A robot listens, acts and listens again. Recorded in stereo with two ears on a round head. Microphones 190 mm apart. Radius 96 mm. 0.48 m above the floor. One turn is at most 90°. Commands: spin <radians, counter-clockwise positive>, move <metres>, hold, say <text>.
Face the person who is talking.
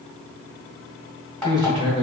spin -0.44
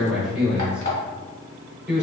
say Facing the man speaking, 1 to 2 m away.